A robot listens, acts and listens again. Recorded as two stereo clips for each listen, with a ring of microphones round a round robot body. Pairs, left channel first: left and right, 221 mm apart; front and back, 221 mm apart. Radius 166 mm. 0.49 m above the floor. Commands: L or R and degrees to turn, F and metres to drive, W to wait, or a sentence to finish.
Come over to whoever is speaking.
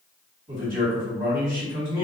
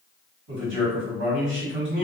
R155
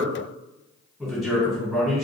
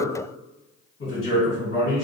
F1.0
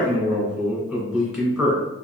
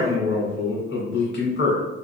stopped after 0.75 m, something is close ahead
Arrived at the man speaking, straight ahead.